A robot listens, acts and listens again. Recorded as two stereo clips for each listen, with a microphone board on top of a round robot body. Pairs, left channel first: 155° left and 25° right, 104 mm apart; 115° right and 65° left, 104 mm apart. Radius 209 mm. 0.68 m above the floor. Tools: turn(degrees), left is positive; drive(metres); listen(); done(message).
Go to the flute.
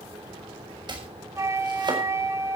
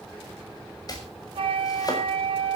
turn(degrees=35)
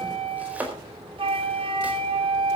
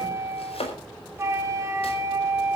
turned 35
drive(metres=1.0)
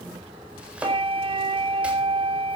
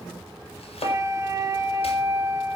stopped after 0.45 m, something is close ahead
done("Blocked. The flute is further on, straight ahead.")